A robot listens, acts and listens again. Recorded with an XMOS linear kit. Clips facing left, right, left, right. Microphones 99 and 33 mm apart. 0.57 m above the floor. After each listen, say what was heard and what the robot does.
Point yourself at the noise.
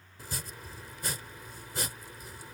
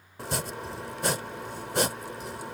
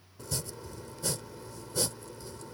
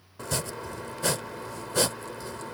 The chopping: about 70° right or 110° right. Turn 70° right.
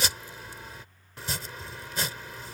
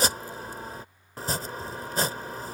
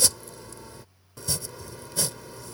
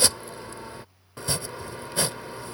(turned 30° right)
So it is at 40° right. Turn 40° right.
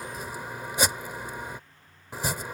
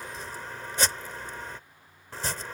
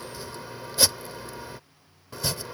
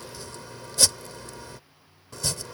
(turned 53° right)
The chopping is now 10° left. Turn 10° left.
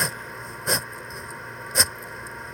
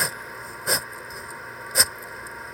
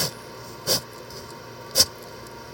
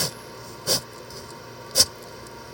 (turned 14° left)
Facing the chopping.